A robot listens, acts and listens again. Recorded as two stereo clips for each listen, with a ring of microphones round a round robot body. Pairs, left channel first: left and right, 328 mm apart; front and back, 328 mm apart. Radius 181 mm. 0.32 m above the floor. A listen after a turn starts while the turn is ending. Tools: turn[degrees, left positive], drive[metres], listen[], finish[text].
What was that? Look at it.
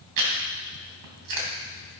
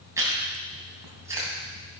Thought: The chewing: 100° right.
Action: turn[-100]
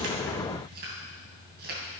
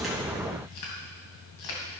Thought: The chewing is now 30° right.
Action: turn[-30]
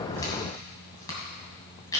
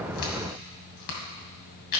Thought: The chewing is now 10° left.
Action: turn[10]
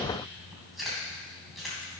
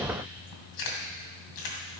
Action: finish[Facing the chewing.]